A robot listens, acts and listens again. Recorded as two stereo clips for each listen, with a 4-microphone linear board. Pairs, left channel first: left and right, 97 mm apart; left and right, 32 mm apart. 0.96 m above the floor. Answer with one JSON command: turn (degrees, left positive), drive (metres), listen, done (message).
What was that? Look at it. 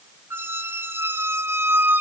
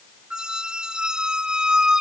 {"turn": -25}
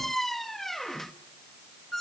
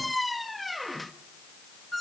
{"done": "Found it: a squeak, straight ahead."}